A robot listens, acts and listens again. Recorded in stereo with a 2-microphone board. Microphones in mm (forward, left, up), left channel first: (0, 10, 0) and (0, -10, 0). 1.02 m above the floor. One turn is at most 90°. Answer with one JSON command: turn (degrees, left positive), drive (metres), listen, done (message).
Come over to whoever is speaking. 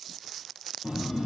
{"listen": true}
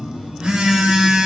{"listen": true}
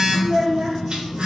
{"turn": -30}
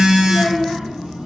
{"listen": true}
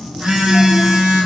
{"listen": true}
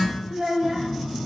{"turn": -90}
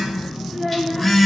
{"turn": -25}
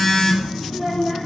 {"drive": 1.0}
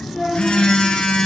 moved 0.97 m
{"drive": 1.0}
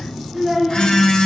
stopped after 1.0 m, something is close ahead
{"done": "I am next to the child speaking."}